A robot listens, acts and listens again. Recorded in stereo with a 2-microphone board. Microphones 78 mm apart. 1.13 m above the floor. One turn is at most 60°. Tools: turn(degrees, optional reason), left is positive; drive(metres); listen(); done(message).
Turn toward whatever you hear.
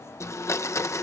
turn(degrees=40, reason="The blender: about 40° left or 140° left.")
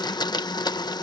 turn(degrees=60, reason="So it is at 100° left.")
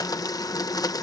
turn(degrees=60, reason="The blender is now 60° left.")
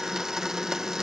turn(degrees=-10, reason="The blender is now 10° right.")
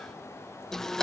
done("Facing the blender.")